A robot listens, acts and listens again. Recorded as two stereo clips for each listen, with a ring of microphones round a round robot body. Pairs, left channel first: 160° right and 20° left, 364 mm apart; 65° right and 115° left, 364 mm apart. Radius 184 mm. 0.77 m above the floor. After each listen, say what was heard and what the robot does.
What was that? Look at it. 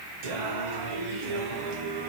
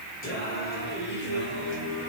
The singing: 10° right. Turn 10° right.
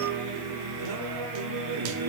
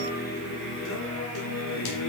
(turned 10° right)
The singing is now 25° right. Turn 25° right.
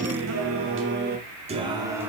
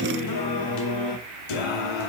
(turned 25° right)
The singing is now 65° right. Turn 65° right.
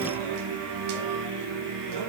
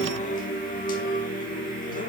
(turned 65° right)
Found it: singing, straight ahead, 1 to 2 m away.